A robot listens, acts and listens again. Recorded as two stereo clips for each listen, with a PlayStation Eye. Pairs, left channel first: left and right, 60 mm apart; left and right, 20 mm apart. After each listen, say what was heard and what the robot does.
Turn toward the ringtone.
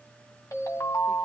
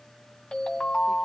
The ringtone: about 65° left or 115° left. Turn 65° left.
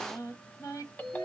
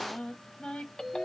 So it is at 35° left. Turn 35° left.
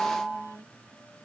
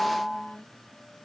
The ringtone is now 15° left. Turn 15° left.
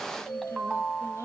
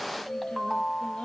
Found it: a ringtone, straight ahead.